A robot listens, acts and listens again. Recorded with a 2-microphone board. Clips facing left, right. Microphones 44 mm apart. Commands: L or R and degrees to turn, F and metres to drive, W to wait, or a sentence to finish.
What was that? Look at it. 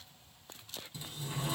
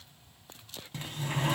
R60
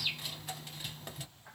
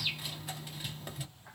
Found it: a sliding door, straight ahead.